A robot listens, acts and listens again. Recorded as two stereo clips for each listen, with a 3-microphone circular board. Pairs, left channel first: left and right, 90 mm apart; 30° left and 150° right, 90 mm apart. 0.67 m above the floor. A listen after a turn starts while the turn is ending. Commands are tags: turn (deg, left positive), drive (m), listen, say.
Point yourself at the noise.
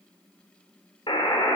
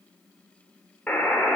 <turn deg="105"/>
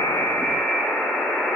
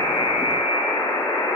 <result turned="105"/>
<turn deg="20"/>
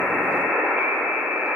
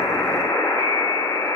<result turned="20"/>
<say>Facing the buzzer, 1 to 2 m away.</say>